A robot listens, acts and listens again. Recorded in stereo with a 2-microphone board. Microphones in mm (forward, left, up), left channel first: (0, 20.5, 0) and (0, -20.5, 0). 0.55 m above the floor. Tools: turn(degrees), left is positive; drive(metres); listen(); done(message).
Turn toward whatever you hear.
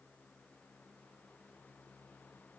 listen()
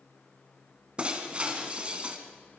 turn(degrees=-30)
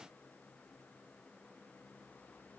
listen()
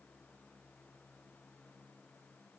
done("I heard breaking glass, but can't make it out now. It was about straight ahead or 120° right.")